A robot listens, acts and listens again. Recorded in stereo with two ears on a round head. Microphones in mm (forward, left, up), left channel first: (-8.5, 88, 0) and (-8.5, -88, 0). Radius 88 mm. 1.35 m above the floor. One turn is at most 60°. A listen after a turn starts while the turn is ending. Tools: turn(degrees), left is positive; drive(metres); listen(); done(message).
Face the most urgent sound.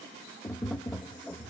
listen()
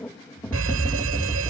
turn(degrees=-60)
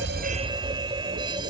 turn(degrees=-25)
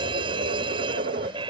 turn(degrees=-25)
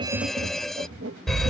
done("Facing the fire alarm.")